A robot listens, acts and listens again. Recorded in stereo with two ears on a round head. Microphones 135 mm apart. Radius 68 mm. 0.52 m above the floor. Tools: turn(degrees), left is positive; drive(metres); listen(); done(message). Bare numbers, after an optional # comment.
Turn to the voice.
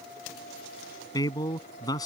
# The man speaking: about 25° left or 155° left.
turn(25)
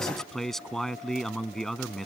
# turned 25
done("Found it: a man speaking, straight ahead.")